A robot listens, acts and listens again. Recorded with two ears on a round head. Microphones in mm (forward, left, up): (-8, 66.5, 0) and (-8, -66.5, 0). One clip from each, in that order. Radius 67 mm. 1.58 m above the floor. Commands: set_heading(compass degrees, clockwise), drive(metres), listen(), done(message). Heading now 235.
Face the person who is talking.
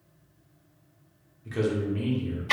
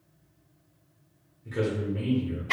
set_heading(190)
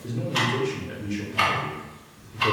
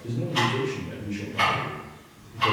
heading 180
set_heading(105)
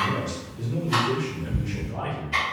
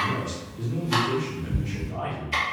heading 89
set_heading(104)
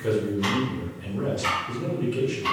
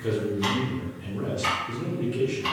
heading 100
done("Facing the man speaking, under 1 m away.")